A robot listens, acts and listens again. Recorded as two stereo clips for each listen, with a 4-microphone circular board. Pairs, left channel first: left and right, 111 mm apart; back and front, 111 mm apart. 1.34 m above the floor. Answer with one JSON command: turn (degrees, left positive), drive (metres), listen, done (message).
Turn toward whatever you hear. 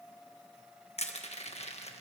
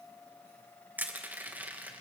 {"turn": 75}
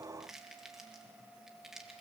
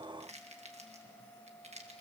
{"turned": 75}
{"done": "Found it: crushing, straight ahead, 1 to 2 m away."}